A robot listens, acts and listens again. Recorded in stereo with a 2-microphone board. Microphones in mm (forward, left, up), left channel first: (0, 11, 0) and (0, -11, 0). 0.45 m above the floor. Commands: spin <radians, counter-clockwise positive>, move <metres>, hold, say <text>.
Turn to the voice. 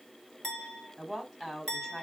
spin 0.52
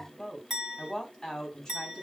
spin 2.53
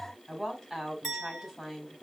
spin -0.17
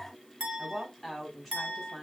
say Found it: a woman speaking, straight ahead.